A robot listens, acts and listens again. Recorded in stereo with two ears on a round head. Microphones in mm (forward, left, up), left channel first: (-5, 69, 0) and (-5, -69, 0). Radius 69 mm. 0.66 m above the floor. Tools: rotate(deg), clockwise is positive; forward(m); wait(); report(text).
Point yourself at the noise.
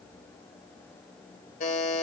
rotate(-55)
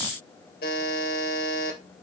rotate(-65)
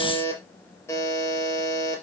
rotate(-15)
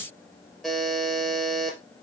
report("Facing the buzzer, 2 to 4 m away.")